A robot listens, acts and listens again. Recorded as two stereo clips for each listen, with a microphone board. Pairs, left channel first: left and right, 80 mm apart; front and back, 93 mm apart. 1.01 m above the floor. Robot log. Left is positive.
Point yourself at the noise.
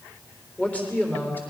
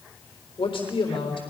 note: The man speaking: 25° left.
cmd yaw +25
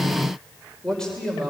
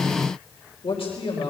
note: The man speaking is now 10° left.
cmd yaw +10
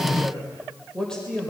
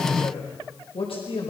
note: The man speaking is now 10° left.
cmd yaw +10
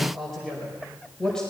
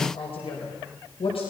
note: The man speaking is now 10° left.
cmd yaw +10
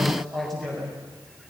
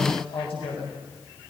end: Found it: a man speaking, straight ahead.